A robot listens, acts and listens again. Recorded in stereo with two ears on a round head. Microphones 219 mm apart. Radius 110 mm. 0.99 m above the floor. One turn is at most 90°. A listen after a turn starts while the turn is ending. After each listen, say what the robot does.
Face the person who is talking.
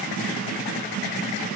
Keep listening.
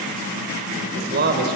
Turn 40° right.
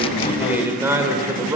Turn 15° right.
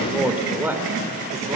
Turn 10° right.
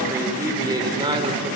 Turn 20° right.
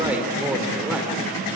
Facing the man speaking.